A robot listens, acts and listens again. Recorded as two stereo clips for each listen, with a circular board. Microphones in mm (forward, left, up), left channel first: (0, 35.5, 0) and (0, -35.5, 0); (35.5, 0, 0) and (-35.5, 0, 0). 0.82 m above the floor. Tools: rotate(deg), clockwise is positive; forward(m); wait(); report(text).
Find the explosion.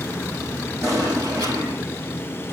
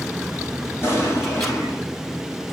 rotate(50)
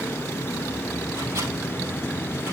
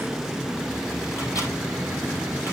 report("Facing where the explosion came from. I can't hear it now.")